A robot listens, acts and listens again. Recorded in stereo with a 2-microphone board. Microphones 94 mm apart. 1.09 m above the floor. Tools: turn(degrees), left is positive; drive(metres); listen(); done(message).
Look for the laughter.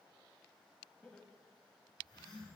turn(degrees=30)
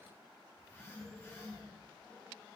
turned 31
listen()
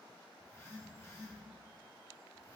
listen()
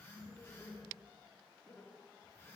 turn(degrees=25)
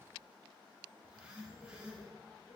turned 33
listen()
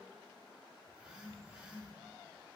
listen()
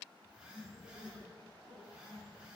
done("I heard laughter, but can't make it out now. It was about 10° right or 125° left.")